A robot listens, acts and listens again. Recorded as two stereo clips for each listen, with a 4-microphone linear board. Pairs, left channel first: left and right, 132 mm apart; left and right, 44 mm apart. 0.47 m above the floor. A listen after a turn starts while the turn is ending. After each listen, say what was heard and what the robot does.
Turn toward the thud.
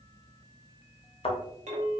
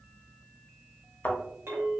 The thud: about 45° left or 135° left. Turn 45° left.
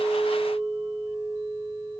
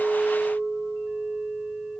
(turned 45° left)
Keep listening.
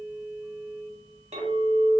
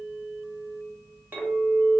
I heard a thud, but can't make it out now. It was about straight ahead or 90° left.